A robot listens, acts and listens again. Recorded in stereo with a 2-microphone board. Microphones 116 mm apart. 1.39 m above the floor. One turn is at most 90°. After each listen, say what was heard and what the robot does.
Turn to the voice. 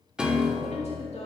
The woman speaking: about 70° left or 110° left. Turn 70° left.
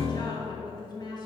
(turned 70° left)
So it is at 40° left. Turn 40° left.
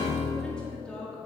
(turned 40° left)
Found it: a woman speaking, straight ahead, 1 to 2 m away.